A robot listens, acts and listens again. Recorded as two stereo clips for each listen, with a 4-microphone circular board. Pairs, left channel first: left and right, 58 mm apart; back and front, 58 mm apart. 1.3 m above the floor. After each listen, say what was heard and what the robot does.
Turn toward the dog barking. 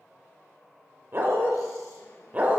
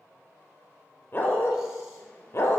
The dog barking: 150° right. Turn 150° right.
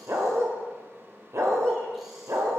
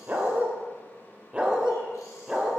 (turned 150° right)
The dog barking is now 80° right. Turn 80° right.
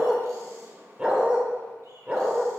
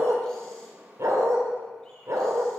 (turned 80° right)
The dog barking is now 20° right. Turn 20° right.
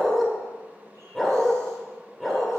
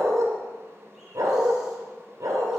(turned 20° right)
Facing the dog barking.